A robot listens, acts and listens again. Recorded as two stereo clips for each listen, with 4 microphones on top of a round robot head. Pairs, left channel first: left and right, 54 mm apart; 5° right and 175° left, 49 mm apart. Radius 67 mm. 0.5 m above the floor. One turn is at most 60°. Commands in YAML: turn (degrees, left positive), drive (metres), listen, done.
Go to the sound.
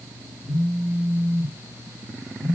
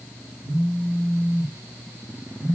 turn: 60
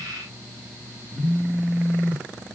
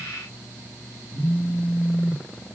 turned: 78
turn: 60
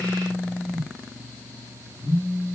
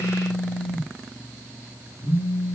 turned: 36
turn: 40
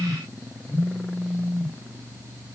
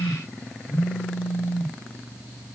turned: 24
turn: 15
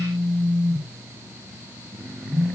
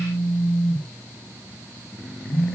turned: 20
drive: 1.0
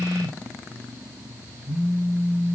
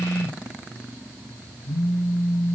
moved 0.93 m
drive: 1.0
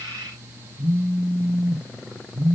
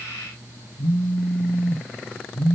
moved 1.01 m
drive: 1.0
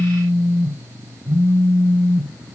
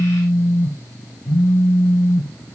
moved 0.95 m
turn: -15
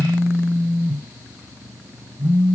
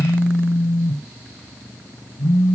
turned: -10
drive: 1.0
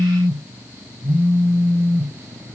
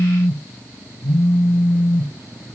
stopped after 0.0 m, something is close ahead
done: "I am next to the phone buzzing."